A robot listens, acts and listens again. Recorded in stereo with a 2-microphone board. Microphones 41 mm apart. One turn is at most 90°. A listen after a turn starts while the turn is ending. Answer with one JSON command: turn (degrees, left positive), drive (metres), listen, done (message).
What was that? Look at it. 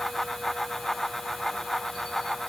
{"listen": true}
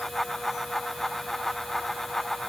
{"listen": true}
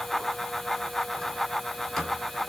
{"turn": 30}
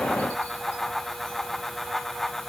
{"listen": true}
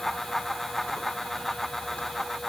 {"listen": true}
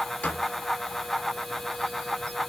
{"turn": 90}
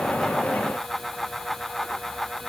{"turn": 50}
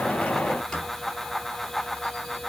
{"turn": 15}
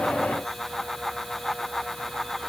{"listen": true}
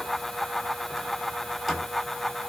{"done": "Found it: a squeak, straight ahead."}